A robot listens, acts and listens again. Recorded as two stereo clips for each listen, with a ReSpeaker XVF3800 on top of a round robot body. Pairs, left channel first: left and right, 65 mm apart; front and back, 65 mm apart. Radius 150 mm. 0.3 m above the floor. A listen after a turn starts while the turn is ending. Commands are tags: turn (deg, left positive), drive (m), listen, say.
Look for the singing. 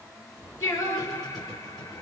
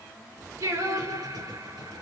<turn deg="145"/>
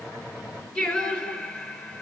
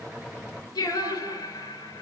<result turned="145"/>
<turn deg="20"/>
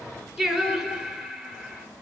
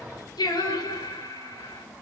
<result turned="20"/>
<say>Found it: singing, straight ahead.</say>